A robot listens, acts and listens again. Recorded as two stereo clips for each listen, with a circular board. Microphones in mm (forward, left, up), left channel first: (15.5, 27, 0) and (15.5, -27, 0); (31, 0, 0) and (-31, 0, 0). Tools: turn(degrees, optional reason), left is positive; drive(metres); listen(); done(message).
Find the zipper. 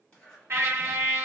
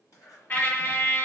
turn(degrees=20, reason="The zipper: 20° left.")
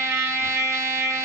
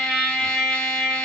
listen()
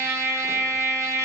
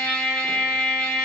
listen()
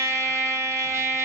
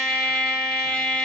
done("Facing where the zipper came from. I can't hear it now.")